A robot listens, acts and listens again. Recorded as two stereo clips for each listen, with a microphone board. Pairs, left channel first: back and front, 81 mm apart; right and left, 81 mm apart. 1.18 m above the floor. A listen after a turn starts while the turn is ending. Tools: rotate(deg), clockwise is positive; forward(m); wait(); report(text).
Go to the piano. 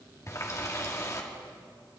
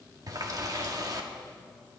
wait()
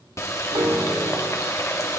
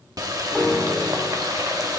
forward(1.0)
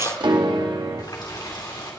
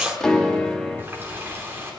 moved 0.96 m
rotate(10)
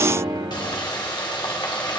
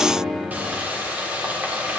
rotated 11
forward(1.0)
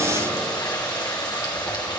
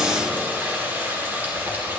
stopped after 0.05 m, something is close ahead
wait()
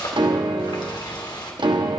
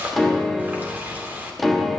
report("Arrived at the piano, straight ahead.")